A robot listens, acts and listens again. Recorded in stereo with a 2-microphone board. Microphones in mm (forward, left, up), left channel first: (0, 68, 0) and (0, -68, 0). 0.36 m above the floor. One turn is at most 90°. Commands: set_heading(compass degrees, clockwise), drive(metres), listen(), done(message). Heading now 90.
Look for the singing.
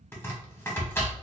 listen()
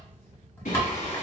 set_heading(0)
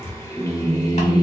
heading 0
set_heading(325)
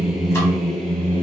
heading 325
set_heading(315)
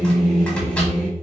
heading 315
set_heading(305)
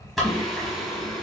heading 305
done("Found it: singing, straight ahead, 1 to 2 m away.")